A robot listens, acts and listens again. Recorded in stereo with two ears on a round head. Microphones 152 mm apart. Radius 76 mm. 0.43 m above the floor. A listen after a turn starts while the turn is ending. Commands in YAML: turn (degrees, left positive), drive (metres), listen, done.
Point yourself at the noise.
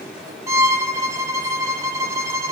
turn: -20
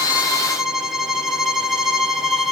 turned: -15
done: "Facing the violin, 1 to 2 m away."